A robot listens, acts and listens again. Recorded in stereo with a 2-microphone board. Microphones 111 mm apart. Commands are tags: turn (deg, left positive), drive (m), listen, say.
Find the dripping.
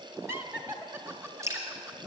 <turn deg="-25"/>
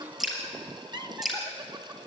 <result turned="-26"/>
<say>Found it: dripping, straight ahead, over 4 m away.</say>